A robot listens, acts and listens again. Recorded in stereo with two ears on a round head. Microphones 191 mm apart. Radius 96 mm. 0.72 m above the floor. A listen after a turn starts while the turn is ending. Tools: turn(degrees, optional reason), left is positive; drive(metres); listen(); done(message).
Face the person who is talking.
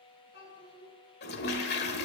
turn(degrees=55, reason="The child speaking: about 55° left or 125° left.")
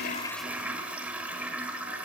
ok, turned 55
listen()
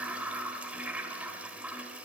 listen()
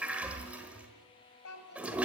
turn(degrees=70, reason="So it is at 70° left.")
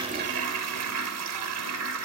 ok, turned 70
listen()
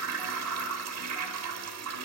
listen()
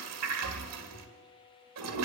done("I heard a child speaking from this way, but can't make it out now.")